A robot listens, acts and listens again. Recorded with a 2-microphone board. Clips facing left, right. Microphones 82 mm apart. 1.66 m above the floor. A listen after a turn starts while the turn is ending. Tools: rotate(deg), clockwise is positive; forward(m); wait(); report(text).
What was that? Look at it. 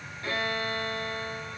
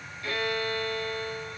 rotate(-35)
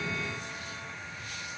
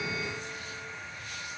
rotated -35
wait()
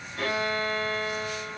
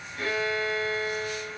rotate(-105)
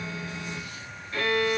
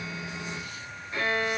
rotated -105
rotate(20)
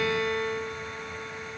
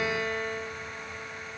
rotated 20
report("Facing the violin, 2 to 4 m away.")